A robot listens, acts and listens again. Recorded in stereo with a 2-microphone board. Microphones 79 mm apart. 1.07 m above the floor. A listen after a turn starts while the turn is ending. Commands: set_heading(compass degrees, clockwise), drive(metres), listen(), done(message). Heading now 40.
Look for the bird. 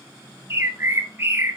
set_heading(70)
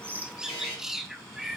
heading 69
done("Facing the bird.")